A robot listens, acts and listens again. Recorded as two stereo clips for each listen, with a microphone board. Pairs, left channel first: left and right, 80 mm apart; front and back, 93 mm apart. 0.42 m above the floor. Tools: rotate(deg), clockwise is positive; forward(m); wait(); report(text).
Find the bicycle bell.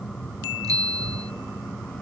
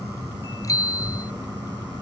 rotate(50)
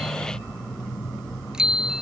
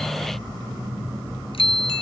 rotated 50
rotate(10)
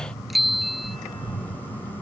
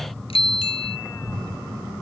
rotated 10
report("Facing the bicycle bell.")